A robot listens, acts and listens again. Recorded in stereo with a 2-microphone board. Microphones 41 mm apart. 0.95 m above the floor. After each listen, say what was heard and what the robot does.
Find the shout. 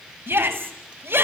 The shout: about 75° right or 105° right. Turn 75° right.
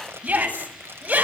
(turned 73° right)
So it is at 35° right. Turn 35° right.
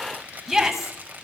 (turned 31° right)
Facing the shout, over 4 m away.